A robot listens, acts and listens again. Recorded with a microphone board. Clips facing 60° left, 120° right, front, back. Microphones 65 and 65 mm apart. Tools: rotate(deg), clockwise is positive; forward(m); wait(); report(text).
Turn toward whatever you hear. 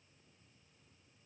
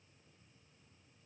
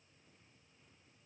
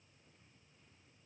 wait()
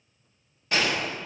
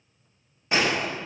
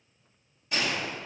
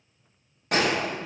rotate(-175)
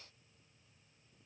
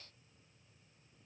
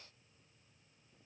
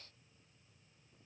report("I heard a gunshot from this way, but can't make it out now.")